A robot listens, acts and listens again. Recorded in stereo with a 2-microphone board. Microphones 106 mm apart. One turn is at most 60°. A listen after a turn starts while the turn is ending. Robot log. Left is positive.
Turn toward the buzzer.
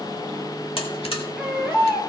note: The buzzer: about 60° left or 120° left.
cmd yaw +60
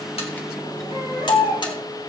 cmd idle
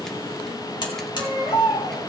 note: So it is at 55° left.
cmd yaw +55
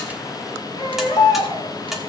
end: Found it: a buzzer, straight ahead, 2 to 4 m away.